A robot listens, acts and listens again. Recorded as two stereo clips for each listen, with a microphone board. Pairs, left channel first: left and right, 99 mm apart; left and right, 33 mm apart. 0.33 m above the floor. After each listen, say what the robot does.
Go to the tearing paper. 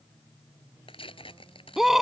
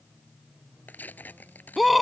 Turn 75° left.
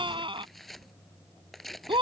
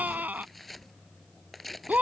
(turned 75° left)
Drive 1.0 m forward.
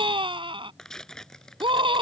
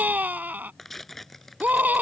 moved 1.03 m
Drive 1.0 m forward.
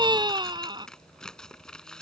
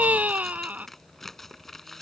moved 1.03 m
Turn 10° left.
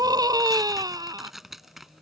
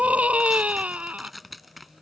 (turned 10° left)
Drive 1.0 m forward.
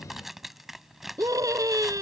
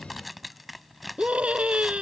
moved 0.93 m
Drive 1.0 m forward.
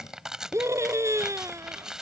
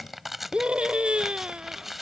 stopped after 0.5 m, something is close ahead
Turn 10° right.
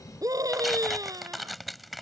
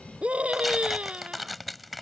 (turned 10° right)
I am next to the tearing paper.